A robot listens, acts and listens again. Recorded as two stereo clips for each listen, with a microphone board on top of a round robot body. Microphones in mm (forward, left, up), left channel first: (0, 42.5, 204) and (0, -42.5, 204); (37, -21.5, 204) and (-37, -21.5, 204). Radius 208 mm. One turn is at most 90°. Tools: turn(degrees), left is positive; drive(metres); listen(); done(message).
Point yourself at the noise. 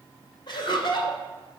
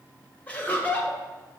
turn(degrees=70)
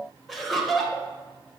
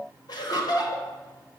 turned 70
done("Facing the laughter, 1 to 2 m away.")